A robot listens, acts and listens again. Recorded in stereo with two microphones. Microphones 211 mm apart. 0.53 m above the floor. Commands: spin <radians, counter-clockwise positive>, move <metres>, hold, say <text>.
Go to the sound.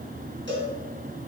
spin -1.13
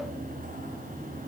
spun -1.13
hold
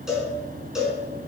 move 1.0
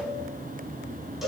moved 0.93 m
move 1.0
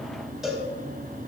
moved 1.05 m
move 1.0
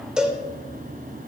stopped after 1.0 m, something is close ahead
say Arrived at the cowbell, straight ahead.